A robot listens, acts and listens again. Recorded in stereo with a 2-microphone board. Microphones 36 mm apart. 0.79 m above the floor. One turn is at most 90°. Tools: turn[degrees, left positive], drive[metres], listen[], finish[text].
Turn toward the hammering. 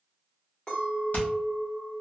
Thought: The hammering: about 50° left or 130° left.
Action: turn[50]
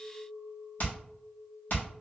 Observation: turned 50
Thought: So it is at 70° left.
Action: turn[70]
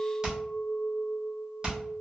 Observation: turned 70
Thought: The hammering is now 25° right.
Action: turn[-25]
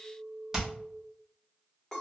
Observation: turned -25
Thought: The hammering is now 15° right.
Action: turn[-15]
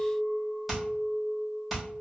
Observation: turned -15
Action: finish[Facing the hammering, 1 to 2 m away.]